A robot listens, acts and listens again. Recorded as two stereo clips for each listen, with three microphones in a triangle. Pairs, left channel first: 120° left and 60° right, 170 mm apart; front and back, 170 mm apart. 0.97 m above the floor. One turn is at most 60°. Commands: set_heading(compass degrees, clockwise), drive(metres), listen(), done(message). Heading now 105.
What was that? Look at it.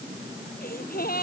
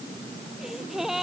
set_heading(45)
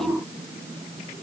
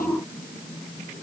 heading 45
set_heading(15)
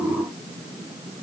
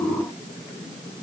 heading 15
done("Facing where the gasp came from. I can't hear it now.")